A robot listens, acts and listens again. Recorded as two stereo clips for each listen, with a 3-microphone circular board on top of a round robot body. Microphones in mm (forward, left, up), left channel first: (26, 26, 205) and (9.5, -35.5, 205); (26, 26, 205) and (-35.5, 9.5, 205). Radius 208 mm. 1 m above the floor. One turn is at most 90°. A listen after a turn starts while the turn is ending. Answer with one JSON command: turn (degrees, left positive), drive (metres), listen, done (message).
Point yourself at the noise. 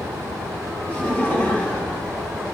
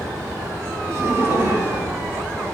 {"turn": 90}
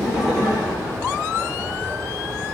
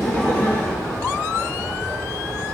{"turn": 70}
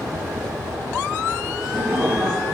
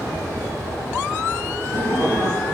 {"turn": -25}
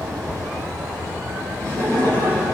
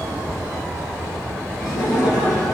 {"turn": 15}
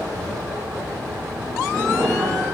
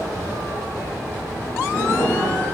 {"done": "Facing the laughter."}